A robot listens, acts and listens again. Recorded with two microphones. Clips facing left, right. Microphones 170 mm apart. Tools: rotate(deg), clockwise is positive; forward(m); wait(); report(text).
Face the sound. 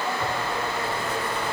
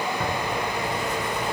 rotate(50)
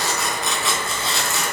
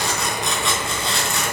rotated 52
report("Found it: tearing paper, straight ahead.")